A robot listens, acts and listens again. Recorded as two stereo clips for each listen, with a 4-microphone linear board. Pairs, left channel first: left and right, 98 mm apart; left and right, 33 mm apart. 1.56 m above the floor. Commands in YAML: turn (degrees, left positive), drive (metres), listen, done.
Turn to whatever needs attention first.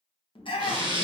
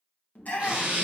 turn: 60
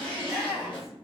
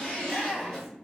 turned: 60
done: "Facing the shout, 1 to 2 m away."